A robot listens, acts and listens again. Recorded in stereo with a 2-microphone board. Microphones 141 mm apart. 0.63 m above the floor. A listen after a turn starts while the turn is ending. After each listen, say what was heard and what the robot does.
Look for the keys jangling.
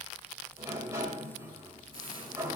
Keep listening.
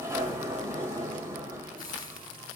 Keep listening.
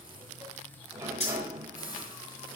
The keys jangling: about 50° left or 130° left. Turn 50° left.
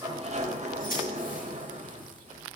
So it is at 85° left. Turn 85° left.
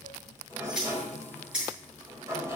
Found it: keys jangling, straight ahead, over 4 m away.